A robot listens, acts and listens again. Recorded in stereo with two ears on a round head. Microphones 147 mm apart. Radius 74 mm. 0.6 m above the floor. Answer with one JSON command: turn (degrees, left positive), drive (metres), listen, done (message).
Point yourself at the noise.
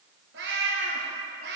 {"turn": -65}
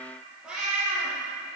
{"done": "Facing the cat meowing, 2 to 4 m away."}